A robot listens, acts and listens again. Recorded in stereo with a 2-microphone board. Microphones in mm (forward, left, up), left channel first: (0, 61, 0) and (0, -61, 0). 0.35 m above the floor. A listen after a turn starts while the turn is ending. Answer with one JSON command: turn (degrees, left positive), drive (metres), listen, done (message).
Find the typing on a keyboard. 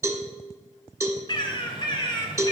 {"listen": true}
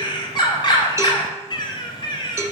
{"listen": true}
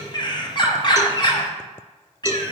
{"done": "I can't make out typing on a keyboard to turn to."}